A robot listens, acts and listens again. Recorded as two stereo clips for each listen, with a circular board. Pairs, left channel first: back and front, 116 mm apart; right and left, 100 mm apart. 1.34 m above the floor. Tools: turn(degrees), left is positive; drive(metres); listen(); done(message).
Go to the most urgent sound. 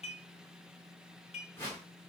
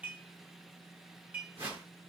listen()
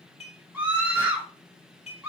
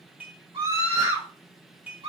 turn(degrees=80)
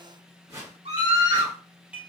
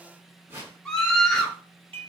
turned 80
drive(metres=1.0)
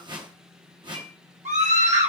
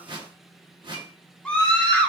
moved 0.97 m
turn(degrees=-10)
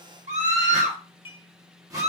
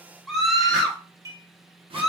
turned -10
drive(metres=1.0)
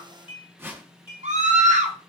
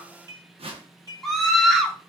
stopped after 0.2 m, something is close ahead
done("I am next to the scream.")